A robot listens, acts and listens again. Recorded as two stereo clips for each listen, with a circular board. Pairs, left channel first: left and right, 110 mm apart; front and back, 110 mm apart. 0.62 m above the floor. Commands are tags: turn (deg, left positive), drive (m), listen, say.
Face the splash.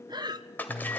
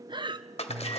<turn deg="15"/>
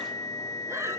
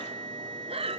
<say>I heard a splash from this way, but can't make it out now.</say>